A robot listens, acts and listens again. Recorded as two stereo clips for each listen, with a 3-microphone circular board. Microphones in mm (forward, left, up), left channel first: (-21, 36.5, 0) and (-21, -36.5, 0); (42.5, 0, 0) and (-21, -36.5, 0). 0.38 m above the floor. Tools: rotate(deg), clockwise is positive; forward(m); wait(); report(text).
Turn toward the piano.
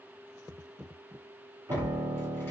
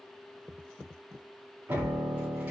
rotate(100)
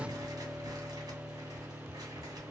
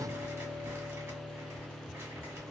rotate(-10)
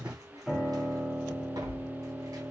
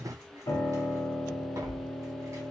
report("Found it: a piano, straight ahead, under 1 m away.")